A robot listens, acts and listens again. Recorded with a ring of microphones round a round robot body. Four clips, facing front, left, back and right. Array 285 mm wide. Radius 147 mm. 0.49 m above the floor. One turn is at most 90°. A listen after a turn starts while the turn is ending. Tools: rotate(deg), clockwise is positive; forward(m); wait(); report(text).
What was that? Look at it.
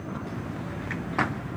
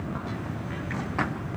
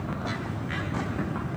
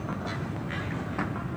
wait()
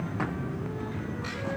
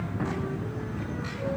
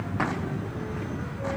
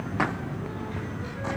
wait()
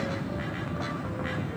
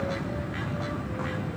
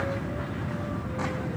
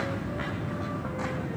report("I can't make out anything.")